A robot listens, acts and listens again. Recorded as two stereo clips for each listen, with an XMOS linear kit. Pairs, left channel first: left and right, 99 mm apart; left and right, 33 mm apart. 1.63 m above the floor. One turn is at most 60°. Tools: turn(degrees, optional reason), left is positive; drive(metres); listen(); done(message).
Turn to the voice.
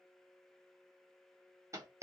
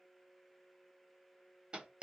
listen()
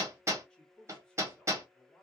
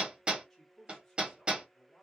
turn(degrees=30)
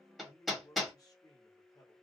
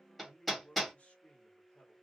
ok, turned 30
turn(degrees=60, reason="So it is at 145° left.")
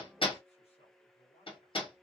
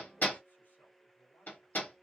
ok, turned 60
turn(degrees=60, reason="The man speaking is now 80° left.")
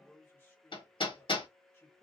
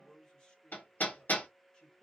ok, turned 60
turn(degrees=20, reason="The man speaking is now 20° left.")
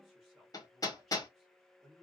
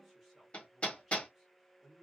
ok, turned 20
done("Found it: a man speaking, straight ahead.")